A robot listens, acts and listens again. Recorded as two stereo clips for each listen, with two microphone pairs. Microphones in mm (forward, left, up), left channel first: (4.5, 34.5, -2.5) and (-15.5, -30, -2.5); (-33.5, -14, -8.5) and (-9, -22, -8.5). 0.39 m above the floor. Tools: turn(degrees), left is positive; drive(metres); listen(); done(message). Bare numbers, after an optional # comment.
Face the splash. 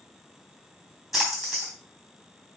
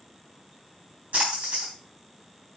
# The splash: 20° right.
turn(-20)
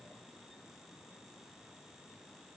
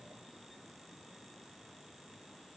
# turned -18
done("I heard a splash from this way, but can't make it out now.")